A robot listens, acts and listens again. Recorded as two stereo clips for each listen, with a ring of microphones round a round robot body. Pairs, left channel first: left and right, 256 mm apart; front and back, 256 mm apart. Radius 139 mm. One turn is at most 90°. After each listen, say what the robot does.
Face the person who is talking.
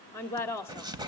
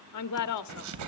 Turn 10° left.
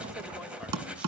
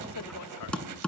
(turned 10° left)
Keep listening.
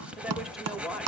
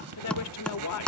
Found it: a woman speaking, straight ahead, 1 to 2 m away.